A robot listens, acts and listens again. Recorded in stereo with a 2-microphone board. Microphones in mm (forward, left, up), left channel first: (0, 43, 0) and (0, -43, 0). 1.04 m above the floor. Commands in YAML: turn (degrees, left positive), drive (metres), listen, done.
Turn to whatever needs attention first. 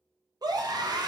turn: -50
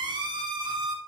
turn: -70
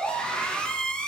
turn: 15
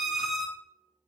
done: "Found it: a scream, straight ahead, 1 to 2 m away."